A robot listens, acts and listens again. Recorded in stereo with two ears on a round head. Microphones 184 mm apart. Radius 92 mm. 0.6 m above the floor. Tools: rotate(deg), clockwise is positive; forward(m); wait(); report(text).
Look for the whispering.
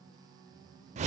wait()
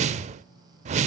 wait()
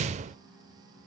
report("I can't make out whispering to turn to.")